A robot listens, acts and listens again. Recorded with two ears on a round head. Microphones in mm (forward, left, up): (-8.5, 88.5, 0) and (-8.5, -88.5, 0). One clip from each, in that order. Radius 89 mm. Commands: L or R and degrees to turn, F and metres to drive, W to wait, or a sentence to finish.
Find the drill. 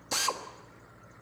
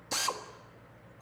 L30
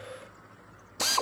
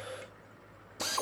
L145
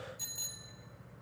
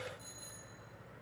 W
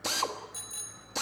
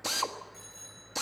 Found it: a drill, straight ahead.